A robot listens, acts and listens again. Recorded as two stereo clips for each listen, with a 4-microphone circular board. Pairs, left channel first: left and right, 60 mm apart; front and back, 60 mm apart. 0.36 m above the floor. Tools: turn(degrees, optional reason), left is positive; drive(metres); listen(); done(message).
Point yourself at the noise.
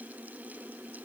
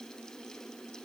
listen()
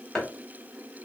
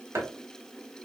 turn(degrees=160, reason="The chopping: 160° left.")
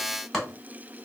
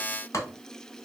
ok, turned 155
done("Found it: chopping, straight ahead.")